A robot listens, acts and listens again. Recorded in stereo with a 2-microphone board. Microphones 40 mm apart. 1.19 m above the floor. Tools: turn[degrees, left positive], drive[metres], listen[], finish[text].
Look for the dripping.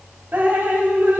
Thought: The dripping: about 60° right or 120° right.
Action: turn[-60]
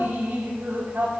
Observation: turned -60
Thought: So it is at 55° right.
Action: turn[-55]
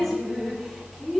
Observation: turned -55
Action: finish[Facing the dripping, 1 to 2 m away.]